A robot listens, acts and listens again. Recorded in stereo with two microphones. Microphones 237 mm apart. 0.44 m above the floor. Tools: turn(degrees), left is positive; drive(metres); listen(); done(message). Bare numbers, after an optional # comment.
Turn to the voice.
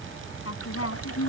# The woman speaking: about 75° left or 105° left.
turn(75)
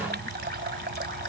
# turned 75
listen()
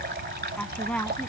done("Facing the woman speaking.")